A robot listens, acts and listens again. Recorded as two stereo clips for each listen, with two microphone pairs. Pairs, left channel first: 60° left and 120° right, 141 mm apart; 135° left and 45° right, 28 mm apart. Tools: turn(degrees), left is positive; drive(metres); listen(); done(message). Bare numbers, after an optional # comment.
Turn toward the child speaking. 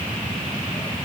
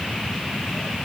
listen()
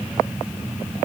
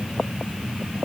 listen()
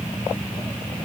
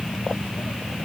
done("I can't make out a child speaking to turn to.")